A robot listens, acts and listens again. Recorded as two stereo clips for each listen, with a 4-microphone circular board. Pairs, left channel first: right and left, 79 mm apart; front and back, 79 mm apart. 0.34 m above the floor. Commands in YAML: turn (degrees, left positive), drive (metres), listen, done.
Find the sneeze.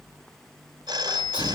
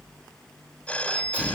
turn: -105
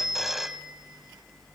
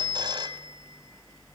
done: "I heard a sneeze from this way, but can't make it out now."